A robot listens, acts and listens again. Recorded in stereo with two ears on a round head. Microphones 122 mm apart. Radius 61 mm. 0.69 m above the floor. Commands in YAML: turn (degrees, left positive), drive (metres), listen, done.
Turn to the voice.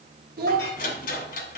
turn: -75
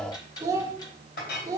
turn: -25
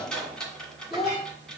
done: "Found it: a child speaking, straight ahead, 1 to 2 m away."